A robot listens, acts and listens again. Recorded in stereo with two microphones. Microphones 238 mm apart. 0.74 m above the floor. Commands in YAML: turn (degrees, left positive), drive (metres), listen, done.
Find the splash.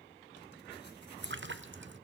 turn: -55
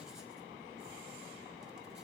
listen: true
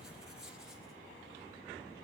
done: "I heard a splash, but can't make it out now. It was about straight ahead or 70° right."